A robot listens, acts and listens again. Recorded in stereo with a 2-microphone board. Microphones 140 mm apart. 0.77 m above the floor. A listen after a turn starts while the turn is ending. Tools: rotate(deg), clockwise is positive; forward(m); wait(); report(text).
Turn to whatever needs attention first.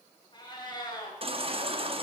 rotate(40)
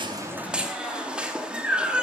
report("Found it: a baby crying, straight ahead.")